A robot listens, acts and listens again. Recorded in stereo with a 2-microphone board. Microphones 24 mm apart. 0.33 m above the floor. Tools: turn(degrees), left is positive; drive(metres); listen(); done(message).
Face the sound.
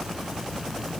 listen()
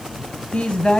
turn(degrees=55)
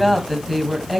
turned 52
turn(degrees=-10)
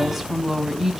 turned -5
turn(degrees=-20)
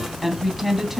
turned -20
turn(degrees=-15)
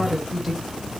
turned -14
turn(degrees=-10)
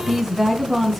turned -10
done("Facing the woman speaking, 2 to 4 m away.")